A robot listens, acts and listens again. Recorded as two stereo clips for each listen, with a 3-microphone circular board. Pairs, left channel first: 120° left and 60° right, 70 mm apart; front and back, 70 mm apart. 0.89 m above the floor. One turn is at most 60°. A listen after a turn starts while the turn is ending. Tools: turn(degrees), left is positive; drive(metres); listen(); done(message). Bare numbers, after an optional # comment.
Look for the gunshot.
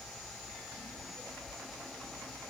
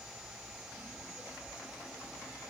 listen()
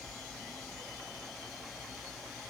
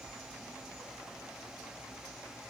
listen()
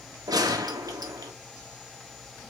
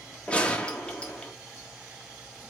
# The gunshot: 75° right.
turn(-60)
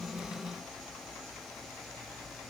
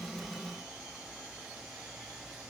# Nothing new. It was at 15° right.
turn(-15)
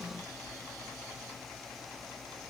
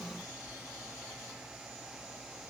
done("Facing where the gunshot came from. I can't hear it now.")